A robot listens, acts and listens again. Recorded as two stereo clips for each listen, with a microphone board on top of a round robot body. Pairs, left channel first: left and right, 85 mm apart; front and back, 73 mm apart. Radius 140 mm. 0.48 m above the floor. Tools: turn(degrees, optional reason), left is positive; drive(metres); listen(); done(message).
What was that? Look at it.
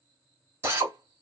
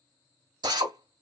turn(degrees=-155, reason="The drill: 155° right.")
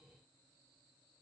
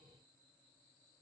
listen()
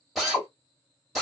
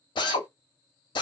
done("Found it: a drill, straight ahead, 1 to 2 m away.")